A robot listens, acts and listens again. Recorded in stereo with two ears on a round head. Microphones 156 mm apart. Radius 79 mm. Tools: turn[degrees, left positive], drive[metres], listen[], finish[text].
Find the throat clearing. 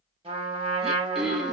Action: turn[-30]
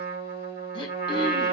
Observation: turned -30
Action: listen[]
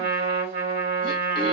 Action: listen[]
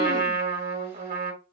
Action: finish[I heard throat clearing, but can't make it out now. It was about 25° left or 145° right.]